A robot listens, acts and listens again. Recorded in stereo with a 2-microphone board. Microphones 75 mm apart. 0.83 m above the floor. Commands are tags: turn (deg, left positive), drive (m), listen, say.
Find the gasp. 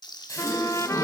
<turn deg="45"/>
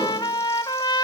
<listen/>
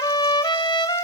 <say>I heard a gasp, but can't make it out now. It was about straight ahead or 90° left.</say>